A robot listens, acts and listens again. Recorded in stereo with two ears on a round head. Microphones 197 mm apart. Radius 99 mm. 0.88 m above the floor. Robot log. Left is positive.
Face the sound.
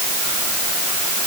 cmd idle
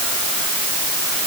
cmd idle
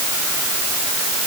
end: I can't make out anything to turn to.